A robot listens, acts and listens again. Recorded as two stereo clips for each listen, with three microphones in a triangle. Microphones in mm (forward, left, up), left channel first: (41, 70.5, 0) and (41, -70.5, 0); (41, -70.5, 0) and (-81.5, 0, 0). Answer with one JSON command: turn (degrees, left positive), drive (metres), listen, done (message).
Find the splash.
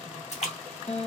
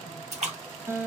{"turn": 120}
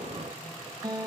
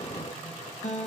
{"done": "Facing where the splash came from. I can't hear it now."}